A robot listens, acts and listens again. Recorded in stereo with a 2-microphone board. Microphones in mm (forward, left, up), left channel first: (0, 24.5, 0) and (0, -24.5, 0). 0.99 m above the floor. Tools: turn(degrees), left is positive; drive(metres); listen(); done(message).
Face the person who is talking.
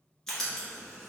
listen()
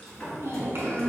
turn(degrees=-55)
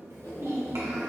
turn(degrees=-70)
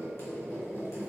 listen()
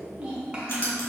turn(degrees=-20)
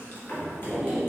listen()
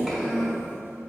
done("Found it: a child speaking, straight ahead.")